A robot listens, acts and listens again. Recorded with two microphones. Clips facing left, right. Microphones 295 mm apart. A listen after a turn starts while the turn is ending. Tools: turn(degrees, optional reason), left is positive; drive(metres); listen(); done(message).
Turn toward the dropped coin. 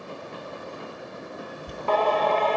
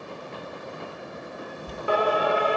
turn(degrees=15, reason="The dropped coin: about 15° left or 165° left.")
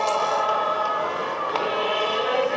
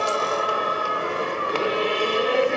listen()
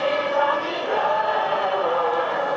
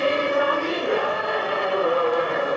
done("I heard a dropped coin, but can't make it out now. It was about straight ahead or 150° left.")